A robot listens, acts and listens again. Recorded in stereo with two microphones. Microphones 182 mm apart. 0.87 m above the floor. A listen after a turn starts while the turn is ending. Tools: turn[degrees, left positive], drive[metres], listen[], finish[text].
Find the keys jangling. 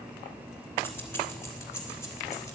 Thought: The keys jangling: about 15° left or 165° left.
Action: turn[15]
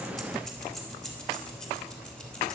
Action: turn[30]
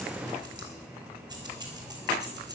Thought: So it is at 20° right.
Action: turn[-20]
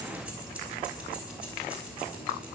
Action: finish[Found it: keys jangling, straight ahead.]